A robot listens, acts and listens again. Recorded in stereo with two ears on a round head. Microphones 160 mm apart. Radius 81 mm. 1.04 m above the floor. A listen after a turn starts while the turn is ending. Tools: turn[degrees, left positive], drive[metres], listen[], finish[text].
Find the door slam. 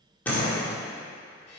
Action: turn[30]
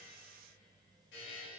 Action: listen[]
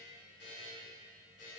Action: finish[I heard a door slam, but can't make it out now. It was about 20° right or 140° left.]